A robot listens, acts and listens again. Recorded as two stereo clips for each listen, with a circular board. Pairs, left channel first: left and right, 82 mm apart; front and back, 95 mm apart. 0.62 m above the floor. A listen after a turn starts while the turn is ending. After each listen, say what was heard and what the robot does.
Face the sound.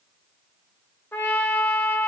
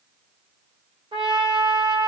The trumpet: 155° left. Turn 155° left.
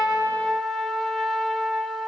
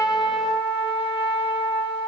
Facing the trumpet, under 1 m away.